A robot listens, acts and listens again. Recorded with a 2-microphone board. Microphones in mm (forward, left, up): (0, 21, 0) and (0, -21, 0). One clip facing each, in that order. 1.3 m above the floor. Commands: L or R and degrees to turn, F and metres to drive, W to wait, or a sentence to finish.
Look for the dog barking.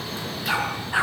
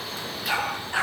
L15
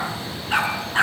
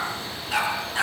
L145
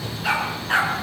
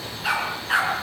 Found it: a dog barking, straight ahead.